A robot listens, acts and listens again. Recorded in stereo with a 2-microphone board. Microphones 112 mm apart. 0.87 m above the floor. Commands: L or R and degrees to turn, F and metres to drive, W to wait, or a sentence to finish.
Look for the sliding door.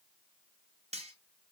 W
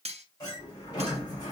L35
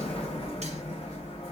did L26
L120
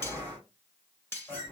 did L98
L20
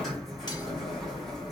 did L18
Facing the sliding door.